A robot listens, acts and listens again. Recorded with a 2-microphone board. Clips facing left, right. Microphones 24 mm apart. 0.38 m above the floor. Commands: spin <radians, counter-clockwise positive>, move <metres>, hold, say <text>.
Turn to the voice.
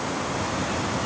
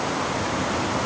hold
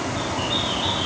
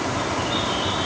hold
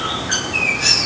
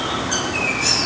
say I can't make out anyone speaking, only a bird.